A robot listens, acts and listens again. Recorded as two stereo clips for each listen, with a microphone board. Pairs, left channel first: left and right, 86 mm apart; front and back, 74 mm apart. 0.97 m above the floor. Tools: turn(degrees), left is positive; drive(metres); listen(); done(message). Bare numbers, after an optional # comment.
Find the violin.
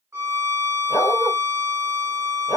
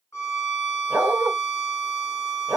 # The violin: 40° right.
turn(-40)
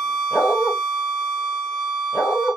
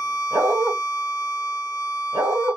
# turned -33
done("Found it: a violin, straight ahead, under 1 m away.")